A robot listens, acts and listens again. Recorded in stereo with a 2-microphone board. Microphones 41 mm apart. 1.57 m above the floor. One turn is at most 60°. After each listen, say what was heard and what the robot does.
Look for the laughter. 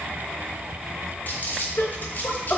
The laughter: about 70° left or 110° left. Turn 60° left.
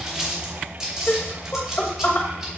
So it is at 45° left. Turn 45° left.
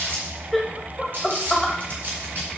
Facing the laughter, 1 to 2 m away.